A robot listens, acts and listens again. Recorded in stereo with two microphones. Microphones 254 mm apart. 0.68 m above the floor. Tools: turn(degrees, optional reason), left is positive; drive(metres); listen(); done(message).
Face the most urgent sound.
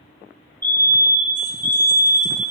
turn(degrees=30)
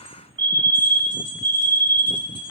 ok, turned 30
turn(degrees=-20, reason="So it is at 20° right.")
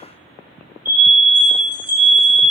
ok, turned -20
turn(degrees=-10, reason="The fire alarm is now 10° right.")
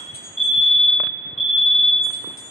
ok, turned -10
done("Facing the fire alarm.")